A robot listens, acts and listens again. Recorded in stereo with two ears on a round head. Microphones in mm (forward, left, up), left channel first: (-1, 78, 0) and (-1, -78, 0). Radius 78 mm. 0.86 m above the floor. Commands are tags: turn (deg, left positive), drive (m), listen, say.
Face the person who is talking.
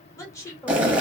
<turn deg="20"/>
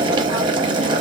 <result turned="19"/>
<listen/>
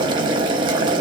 <listen/>
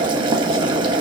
<say>I heard a woman speaking, but can't make it out now. It was about straight ahead or 145° left.</say>